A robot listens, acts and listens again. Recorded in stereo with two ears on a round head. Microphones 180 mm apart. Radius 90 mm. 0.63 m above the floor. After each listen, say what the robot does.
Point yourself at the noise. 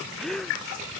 Turn 30° left.
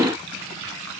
Keep listening.
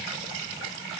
I heard a gasp, but can't make it out now. It was about 30° right or 150° left.